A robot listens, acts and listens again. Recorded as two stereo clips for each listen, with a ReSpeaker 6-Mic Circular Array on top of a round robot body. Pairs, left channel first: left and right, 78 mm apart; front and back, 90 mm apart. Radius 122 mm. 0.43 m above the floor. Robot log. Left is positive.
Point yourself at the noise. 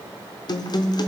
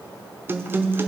note: The guitar: 115° left.
cmd yaw +115
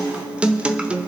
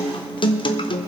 note: The guitar is now 15° right.
cmd yaw -15
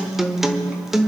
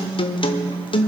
end: Facing the guitar.